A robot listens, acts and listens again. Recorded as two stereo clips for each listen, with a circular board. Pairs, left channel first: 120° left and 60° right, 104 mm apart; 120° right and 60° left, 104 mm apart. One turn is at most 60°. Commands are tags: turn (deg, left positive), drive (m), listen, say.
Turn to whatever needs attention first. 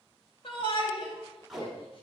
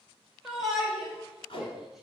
<turn deg="60"/>
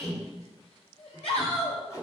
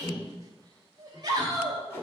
<turn deg="60"/>
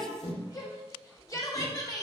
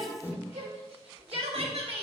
<turn deg="60"/>
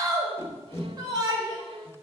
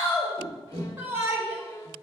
<turn deg="-10"/>
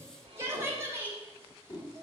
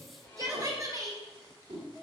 <say>Facing the shout, 2 to 4 m away.</say>